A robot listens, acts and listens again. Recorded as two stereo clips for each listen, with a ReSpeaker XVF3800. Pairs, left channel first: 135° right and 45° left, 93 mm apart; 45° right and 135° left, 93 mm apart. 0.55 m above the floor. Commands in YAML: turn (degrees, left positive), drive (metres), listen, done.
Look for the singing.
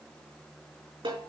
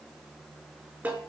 listen: true
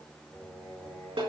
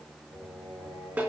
turn: 145
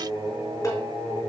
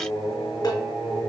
turn: -10
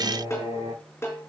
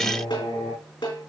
done: "Facing the singing."